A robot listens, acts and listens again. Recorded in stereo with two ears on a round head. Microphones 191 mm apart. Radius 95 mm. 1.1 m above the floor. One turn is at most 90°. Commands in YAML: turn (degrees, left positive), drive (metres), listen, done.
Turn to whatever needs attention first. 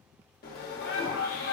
turn: 45
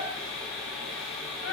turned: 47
turn: 80
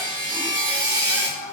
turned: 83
done: "Found it: a shout, straight ahead, 1 to 2 m away."